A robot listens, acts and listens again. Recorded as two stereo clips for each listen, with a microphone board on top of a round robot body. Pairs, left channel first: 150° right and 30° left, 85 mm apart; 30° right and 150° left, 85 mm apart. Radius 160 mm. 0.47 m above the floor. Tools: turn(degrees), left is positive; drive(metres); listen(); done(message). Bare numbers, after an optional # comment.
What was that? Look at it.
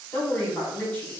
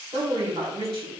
# The woman speaking: 140° left.
turn(140)
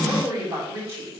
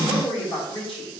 # The woman speaking is now 25° right.
turn(-25)
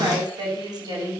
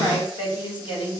done("Facing the woman speaking.")